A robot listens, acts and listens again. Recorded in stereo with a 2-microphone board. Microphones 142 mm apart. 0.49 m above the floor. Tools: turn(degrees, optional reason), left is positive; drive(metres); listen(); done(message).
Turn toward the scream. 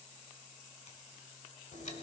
listen()
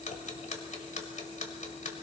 listen()
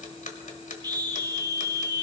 turn(degrees=-30, reason="The scream: about 30° right or 150° right.")
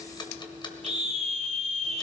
turn(degrees=-115, reason="So it is at 115° right.")
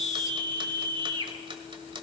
turn(degrees=-40, reason="The scream is now 40° right.")
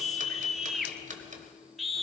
done("Found it: a scream, straight ahead, 1 to 2 m away.")